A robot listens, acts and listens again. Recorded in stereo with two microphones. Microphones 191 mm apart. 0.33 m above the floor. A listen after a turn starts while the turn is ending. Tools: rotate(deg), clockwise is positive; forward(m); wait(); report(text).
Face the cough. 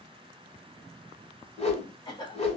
rotate(-25)
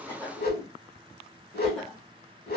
wait()
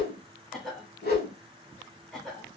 report("Found it: a cough, straight ahead.")